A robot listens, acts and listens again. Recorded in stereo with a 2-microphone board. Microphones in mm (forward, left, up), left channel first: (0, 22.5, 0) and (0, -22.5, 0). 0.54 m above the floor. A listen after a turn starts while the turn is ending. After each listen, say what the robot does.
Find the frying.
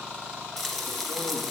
Turn 30° left.
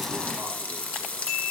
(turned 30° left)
Turn 150° left.
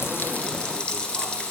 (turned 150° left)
Turn 25° left.
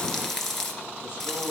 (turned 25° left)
Turn 15° left.
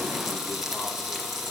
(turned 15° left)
Found it: frying, straight ahead, 1 to 2 m away.